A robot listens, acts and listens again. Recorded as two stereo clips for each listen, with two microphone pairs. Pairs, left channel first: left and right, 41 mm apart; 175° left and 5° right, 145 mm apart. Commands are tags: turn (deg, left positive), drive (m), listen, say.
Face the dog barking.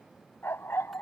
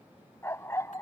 <turn deg="105"/>
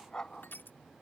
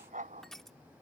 <turn deg="20"/>
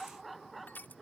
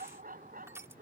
<say>Facing the dog barking.</say>